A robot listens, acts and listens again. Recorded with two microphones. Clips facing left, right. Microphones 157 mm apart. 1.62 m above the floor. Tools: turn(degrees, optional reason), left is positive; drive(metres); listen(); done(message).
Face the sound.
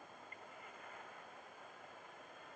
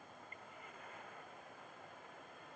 listen()
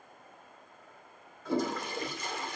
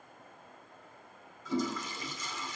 turn(degrees=60, reason="The toilet flushing: about 60° left or 120° left.")
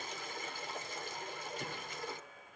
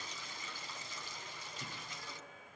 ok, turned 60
turn(degrees=55, reason="So it is at 55° left.")
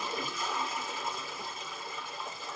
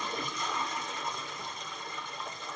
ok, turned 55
done("Found it: a toilet flushing, straight ahead.")